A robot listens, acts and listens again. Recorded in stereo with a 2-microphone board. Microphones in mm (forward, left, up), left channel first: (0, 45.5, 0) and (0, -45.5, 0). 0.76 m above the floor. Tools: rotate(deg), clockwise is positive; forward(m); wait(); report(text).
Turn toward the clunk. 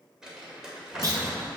rotate(45)
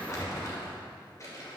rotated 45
wait()
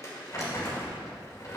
report("I heard a clunk, but can't make it out now. It was about straight ahead or 90° right.")